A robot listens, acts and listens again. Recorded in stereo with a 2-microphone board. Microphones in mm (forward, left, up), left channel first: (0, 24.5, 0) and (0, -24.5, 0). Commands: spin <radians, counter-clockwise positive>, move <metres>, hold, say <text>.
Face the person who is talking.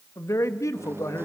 spin 1.57
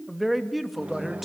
say Facing the man speaking, 2 to 4 m away.